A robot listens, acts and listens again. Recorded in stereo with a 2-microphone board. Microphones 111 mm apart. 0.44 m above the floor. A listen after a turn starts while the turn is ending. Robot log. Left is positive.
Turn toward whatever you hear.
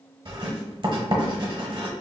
note: The writing: about 45° right or 135° right.
cmd yaw -45
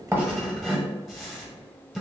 end: Facing the writing.